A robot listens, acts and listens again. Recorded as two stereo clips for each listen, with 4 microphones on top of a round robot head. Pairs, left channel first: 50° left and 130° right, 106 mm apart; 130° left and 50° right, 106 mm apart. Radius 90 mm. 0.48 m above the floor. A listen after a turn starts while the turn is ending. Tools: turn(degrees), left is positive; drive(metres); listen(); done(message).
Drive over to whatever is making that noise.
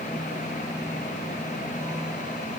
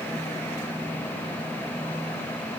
listen()
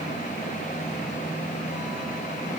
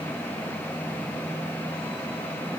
listen()
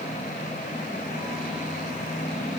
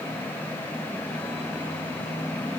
done("I can't make out anything.")